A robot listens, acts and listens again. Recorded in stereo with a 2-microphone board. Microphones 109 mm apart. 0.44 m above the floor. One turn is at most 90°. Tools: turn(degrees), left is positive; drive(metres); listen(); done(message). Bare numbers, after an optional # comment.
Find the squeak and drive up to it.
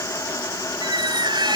# The squeak: about 45° right or 135° right.
turn(-45)
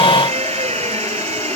# So it is at 95° right.
turn(-90)
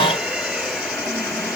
listen()
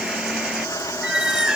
drive(1.0)
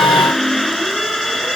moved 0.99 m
drive(1.0)
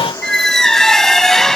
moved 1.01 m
drive(1.0)
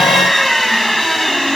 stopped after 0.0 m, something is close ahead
done("I am next to the squeak.")